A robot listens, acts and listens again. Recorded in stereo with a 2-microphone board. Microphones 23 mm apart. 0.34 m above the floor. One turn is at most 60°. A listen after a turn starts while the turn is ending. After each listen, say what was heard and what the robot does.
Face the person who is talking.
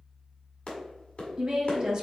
The woman speaking: about 35° right or 145° right. Turn 35° right.
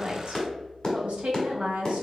So it is at 100° right. Turn 60° right.
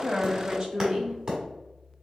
The woman speaking is now 35° right. Turn 35° right.
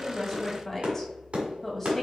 The woman speaking is now 10° left. Turn 10° left.
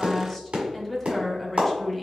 Facing the woman speaking.